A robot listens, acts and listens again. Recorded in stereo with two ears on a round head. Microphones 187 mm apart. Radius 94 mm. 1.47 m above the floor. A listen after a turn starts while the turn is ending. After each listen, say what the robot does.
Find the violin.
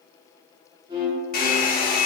Turn 25° right.
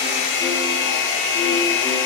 Keep listening.
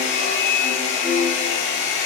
Facing the violin.